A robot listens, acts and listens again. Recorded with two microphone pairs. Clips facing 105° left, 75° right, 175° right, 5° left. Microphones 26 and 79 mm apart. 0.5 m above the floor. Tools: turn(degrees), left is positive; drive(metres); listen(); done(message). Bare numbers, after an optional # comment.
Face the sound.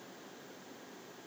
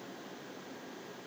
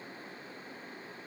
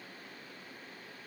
listen()
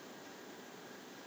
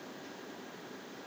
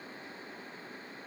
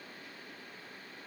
listen()
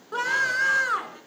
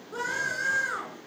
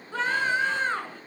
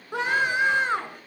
# The scream: 75° left.
turn(75)
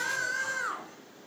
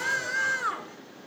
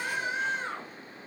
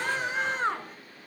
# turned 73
done("Found it: a scream, straight ahead, over 4 m away.")